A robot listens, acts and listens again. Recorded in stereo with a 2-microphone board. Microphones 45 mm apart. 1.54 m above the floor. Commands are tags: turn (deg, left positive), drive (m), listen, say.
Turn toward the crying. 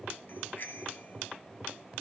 <listen/>
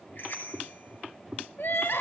<turn deg="60"/>
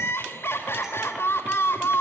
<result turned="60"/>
<turn deg="65"/>
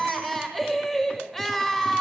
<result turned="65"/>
<say>Facing the crying, over 4 m away.</say>